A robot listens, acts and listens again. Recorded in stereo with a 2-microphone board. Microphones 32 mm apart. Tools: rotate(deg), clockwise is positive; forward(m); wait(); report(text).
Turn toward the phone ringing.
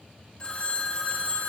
rotate(-30)
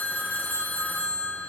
rotate(-120)
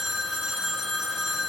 rotate(15)
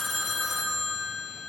report("Facing the phone ringing, under 1 m away.")